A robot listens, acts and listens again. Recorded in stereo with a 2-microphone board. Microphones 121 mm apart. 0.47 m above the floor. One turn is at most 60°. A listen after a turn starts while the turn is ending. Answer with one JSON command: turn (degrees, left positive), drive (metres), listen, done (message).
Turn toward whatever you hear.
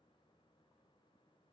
{"listen": true}
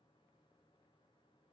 {"listen": true}
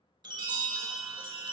{"turn": -40}
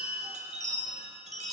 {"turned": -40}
{"turn": -60}
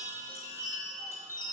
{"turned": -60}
{"turn": -25}
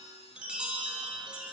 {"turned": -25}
{"turn": -10}
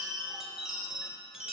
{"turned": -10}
{"done": "Facing the chime."}